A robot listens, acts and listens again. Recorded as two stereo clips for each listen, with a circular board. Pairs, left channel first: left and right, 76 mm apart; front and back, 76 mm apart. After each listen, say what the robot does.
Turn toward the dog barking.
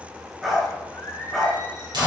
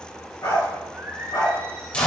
Facing the dog barking, 2 to 4 m away.